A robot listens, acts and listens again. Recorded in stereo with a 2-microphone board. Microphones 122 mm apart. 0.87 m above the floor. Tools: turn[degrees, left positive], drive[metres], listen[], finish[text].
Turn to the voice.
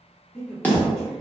Action: turn[30]
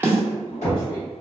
Thought: So it is at 145° left.
Action: turn[145]
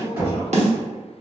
Action: listen[]
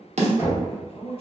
Thought: The man speaking is now 45° left.
Action: turn[45]
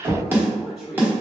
Action: finish[Found it: a man speaking, straight ahead, 1 to 2 m away.]